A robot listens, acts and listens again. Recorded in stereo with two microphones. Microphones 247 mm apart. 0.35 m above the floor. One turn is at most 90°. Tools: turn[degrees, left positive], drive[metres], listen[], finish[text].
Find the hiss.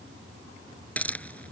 Action: turn[30]
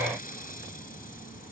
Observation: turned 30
Action: listen[]
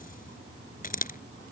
Thought: So it is at 145° left.
Action: turn[90]
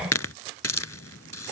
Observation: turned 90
Thought: The hiss is now 75° left.
Action: turn[75]
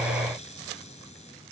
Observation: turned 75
Action: listen[]
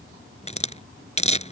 Thought: The hiss is now 25° left.
Action: turn[25]
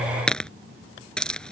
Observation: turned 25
Action: finish[Facing the hiss.]